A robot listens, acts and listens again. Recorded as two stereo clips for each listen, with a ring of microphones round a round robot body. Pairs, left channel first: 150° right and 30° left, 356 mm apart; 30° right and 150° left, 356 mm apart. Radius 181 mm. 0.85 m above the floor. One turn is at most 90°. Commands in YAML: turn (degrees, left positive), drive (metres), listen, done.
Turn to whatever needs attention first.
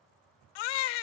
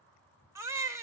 turn: -90
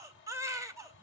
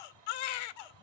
turn: -50
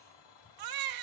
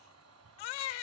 done: "Found it: a baby crying, straight ahead."